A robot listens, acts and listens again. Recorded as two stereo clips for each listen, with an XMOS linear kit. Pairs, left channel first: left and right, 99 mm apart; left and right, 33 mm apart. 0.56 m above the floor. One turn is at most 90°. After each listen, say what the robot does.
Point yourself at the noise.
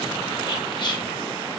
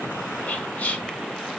Turn 50° left.
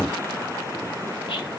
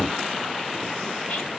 Keep listening.
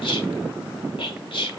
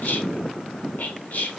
Turn 70° left.
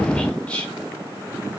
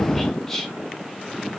Turn 10° left.
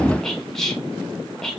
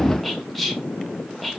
Facing the whispering.